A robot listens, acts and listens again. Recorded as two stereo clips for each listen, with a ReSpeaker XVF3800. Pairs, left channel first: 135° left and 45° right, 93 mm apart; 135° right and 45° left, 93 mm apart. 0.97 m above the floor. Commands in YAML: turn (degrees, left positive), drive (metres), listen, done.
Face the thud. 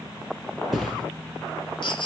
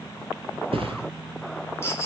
turn: 45
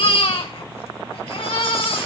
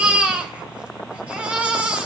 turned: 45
done: "Facing where the thud came from. I can't hear it now."